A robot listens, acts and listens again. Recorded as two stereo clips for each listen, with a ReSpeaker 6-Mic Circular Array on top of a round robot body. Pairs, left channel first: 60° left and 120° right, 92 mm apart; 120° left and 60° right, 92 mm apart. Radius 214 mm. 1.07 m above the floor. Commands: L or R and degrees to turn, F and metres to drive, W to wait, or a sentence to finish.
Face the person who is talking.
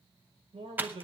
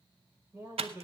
R125
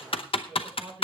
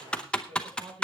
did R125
R35
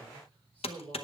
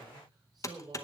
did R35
R10
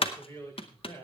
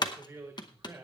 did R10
Facing the man speaking, over 4 m away.